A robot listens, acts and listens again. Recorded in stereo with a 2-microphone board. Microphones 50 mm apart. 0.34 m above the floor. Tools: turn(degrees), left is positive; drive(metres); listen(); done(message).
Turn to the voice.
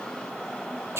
listen()
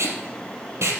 listen()
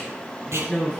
turn(degrees=30)
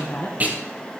turn(degrees=145)
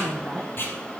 turn(degrees=-20)
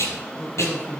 done("Found it: a woman speaking, straight ahead, 2 to 4 m away.")